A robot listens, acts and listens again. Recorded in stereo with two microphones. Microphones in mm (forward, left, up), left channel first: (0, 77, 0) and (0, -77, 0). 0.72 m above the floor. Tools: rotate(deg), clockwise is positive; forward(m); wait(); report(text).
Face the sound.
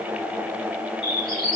rotate(-30)
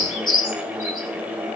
rotate(-115)
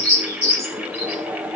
rotate(-45)
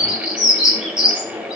report("Found it: a bird, straight ahead.")